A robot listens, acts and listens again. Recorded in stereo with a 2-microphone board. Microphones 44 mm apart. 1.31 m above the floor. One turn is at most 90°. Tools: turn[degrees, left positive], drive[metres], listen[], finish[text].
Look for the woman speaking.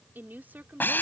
Thought: The woman speaking: about 40° right or 140° right.
Action: turn[-40]
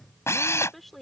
Action: finish[Facing the woman speaking.]